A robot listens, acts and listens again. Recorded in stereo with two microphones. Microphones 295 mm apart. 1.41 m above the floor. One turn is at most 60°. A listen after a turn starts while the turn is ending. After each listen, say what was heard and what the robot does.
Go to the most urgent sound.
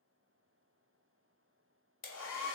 Keep listening.
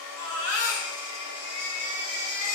The baby crying: about 60° right or 120° right. Turn 60° right.
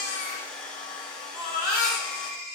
So it is at 20° right. Turn 20° right.
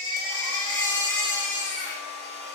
Drive 1.0 m forward.
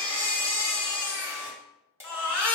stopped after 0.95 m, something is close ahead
The baby crying is now 10° left. Turn 10° left.
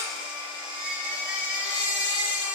Arrived at the baby crying, straight ahead.